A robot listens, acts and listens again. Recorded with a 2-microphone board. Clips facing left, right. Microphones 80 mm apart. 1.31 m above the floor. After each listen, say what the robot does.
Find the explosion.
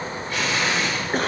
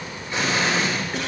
Turn 25° right.
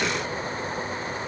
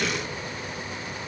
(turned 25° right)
Keep listening.
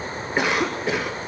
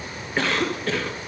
I heard an explosion, but can't make it out now. It was about straight ahead or 130° right.